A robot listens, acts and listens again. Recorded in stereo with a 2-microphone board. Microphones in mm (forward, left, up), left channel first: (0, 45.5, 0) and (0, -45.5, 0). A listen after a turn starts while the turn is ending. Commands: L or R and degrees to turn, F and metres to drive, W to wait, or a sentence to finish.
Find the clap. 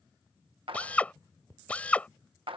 R70
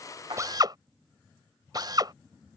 W
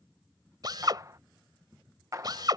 R40
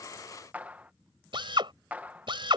R15
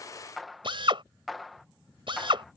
Found it: a clap, straight ahead.